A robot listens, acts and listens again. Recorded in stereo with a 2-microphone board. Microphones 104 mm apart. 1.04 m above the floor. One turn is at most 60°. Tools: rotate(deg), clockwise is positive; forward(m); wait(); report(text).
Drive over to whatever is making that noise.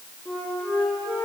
rotate(-30)
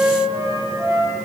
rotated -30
rotate(25)
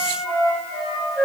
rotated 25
forward(1.0)
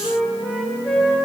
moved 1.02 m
forward(1.0)
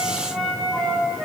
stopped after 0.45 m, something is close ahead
report("I am next to the flute.")